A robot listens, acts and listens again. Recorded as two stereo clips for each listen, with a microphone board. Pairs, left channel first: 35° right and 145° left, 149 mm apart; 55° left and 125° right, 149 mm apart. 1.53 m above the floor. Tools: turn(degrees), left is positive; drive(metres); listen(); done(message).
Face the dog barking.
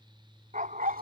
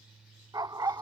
turn(degrees=170)
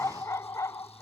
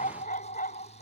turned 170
turn(degrees=35)
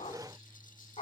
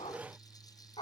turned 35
done("Found it: a dog barking, straight ahead.")